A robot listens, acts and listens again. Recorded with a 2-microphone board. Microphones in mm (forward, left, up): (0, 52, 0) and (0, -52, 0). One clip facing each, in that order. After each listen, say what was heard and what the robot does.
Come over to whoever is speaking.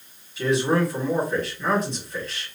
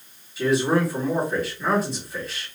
Turn 30° right.
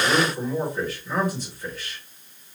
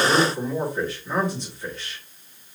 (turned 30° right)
So it is at 150° right. Turn 150° right.
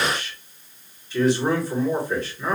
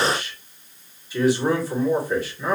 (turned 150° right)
The man speaking is now 15° right. Turn 15° right.
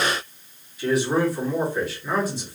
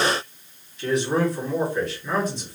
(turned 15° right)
Drive 1.0 m forward.
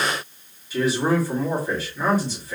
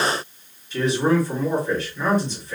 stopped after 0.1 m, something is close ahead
Something is in my way. I am facing the man speaking but have not reached it.